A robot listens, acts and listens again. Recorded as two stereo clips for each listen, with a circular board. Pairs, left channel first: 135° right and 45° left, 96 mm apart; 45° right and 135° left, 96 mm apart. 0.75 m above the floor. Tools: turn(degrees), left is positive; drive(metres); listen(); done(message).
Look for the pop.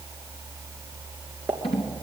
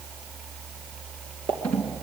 turn(degrees=115)
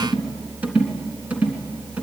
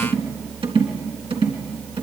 done("Facing where the pop came from. I can't hear it now.")